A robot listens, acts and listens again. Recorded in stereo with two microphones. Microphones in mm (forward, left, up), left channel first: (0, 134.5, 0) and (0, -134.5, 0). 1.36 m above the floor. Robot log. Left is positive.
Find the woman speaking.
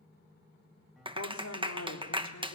cmd yaw +90
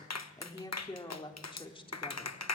note: So it is at 20° left.
cmd yaw +20
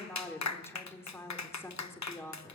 note: The woman speaking is now 10° left.
cmd yaw +10
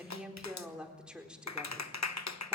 end: Facing the woman speaking.